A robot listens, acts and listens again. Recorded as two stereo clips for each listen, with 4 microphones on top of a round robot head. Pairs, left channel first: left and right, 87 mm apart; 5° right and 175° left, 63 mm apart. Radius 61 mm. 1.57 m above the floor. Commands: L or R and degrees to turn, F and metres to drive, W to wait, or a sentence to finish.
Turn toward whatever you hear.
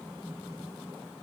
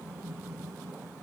W
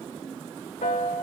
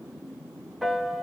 L85
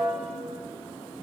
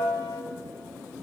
Found it: a piano, straight ahead, 1 to 2 m away.